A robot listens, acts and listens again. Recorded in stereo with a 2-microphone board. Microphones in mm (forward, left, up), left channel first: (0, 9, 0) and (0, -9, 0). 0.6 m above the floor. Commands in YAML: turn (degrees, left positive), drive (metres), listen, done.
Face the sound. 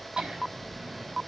listen: true
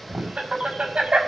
turn: -65
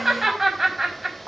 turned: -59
turn: -10
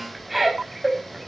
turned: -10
done: "Found it: laughter, straight ahead, over 4 m away."